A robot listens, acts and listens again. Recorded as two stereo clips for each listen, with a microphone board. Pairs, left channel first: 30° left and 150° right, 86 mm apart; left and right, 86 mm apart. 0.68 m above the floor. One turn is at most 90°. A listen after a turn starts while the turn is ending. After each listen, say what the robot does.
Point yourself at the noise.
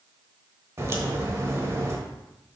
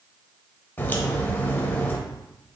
Turn 90° left.
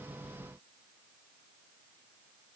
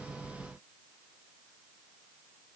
Turn 65° left.
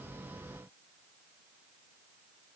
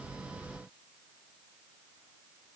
I heard a crack from this way, but can't make it out now.